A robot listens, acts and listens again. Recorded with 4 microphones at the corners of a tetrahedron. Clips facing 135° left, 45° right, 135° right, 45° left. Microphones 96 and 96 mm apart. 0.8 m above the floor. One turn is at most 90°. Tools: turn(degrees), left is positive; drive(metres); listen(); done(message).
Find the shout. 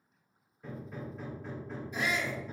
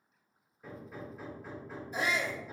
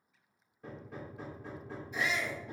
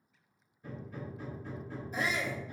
done("Found it: a shout, straight ahead, 1 to 2 m away.")